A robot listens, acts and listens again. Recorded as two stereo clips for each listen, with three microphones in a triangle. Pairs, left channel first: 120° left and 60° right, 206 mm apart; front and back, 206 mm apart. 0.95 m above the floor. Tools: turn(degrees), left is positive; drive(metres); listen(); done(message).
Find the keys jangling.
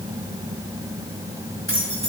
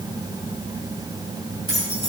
turn(degrees=120)
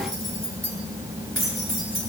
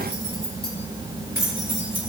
turn(degrees=-45)
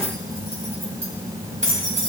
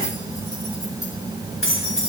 done("Found it: keys jangling, straight ahead, 2 to 4 m away.")